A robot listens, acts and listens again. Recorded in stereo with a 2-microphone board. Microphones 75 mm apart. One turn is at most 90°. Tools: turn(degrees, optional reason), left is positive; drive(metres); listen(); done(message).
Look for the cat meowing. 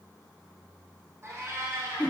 turn(degrees=-40, reason="The cat meowing: about 40° right or 140° right.")
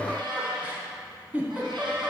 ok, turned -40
turn(degrees=-90, reason="So it is at 100° right.")
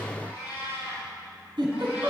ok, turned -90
turn(degrees=-20, reason="The cat meowing is now 20° right.")
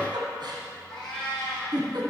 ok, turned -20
done("Facing the cat meowing, over 4 m away.")